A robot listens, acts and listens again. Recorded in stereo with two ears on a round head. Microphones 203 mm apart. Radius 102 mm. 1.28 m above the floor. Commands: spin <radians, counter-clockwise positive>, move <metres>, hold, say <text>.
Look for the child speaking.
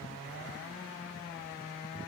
hold
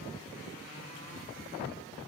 hold
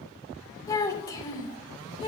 spin 0.35
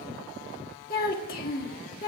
spin 2.36
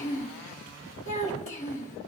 spin 0.61
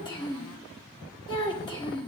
spin 0.35
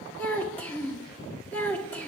spin 0.17
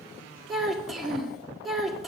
say Found it: a child speaking, straight ahead, 1 to 2 m away.